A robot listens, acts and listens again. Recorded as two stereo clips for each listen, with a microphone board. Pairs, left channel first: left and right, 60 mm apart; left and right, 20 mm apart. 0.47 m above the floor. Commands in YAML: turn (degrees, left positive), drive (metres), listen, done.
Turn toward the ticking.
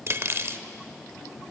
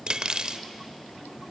listen: true
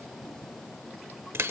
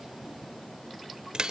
listen: true
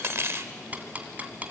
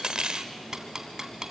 turn: -30
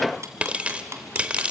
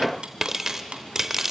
turn: -125
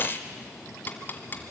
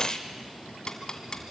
turn: 35
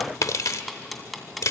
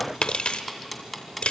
done: "Found it: ticking, straight ahead."